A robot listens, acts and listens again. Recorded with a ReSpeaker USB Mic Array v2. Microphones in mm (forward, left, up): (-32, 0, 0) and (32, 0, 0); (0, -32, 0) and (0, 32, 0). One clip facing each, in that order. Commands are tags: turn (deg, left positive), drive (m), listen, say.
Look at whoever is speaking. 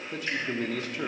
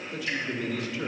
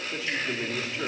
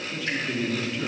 <turn deg="-150"/>
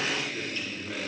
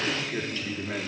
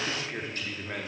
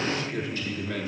<turn deg="-30"/>
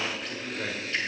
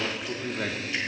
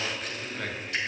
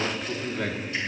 <turn deg="10"/>
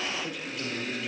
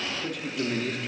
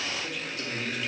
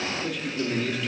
<say>Facing the man speaking.</say>